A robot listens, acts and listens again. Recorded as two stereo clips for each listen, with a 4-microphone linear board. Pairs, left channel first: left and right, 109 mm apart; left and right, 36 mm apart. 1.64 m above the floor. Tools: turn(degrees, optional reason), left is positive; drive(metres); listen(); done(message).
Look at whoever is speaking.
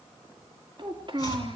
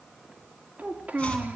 turn(degrees=-50, reason="The child speaking: about 50° right or 130° right.")
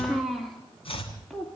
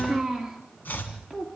done("Found it: a child speaking, straight ahead.")